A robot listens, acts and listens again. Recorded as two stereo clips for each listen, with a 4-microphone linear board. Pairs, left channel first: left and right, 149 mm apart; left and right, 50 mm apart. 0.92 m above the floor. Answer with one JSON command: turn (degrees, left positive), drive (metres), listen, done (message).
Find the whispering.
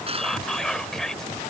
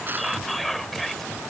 {"turn": 30}
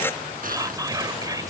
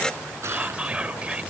{"turn": -25}
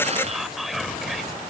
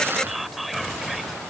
{"done": "Facing the whispering."}